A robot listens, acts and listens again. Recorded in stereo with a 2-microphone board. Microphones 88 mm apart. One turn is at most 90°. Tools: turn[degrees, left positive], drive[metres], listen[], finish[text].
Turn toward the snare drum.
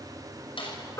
Thought: The snare drum: about 70° left or 110° left.
Action: turn[70]
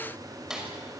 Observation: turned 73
Action: finish[Found it: a snare drum, straight ahead, over 4 m away.]